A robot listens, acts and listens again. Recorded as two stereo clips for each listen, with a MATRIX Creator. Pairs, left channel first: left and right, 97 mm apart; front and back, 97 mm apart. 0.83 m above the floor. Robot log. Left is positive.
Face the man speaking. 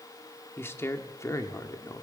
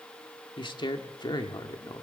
note: The man speaking: 40° left.
cmd yaw +40
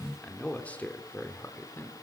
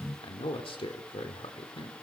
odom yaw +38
note: The man speaking is now 25° left.
cmd yaw +25
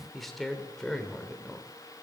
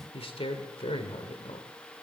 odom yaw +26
note: The man speaking is now 10° left.
cmd yaw +10
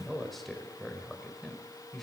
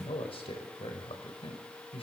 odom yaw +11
end: Facing the man speaking, over 4 m away.